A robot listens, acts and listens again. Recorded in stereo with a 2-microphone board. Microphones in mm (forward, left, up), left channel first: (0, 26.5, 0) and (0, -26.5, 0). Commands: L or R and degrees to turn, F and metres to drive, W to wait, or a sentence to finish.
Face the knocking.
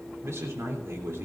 W
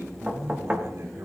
R25
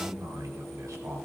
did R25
W
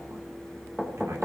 Facing the knocking.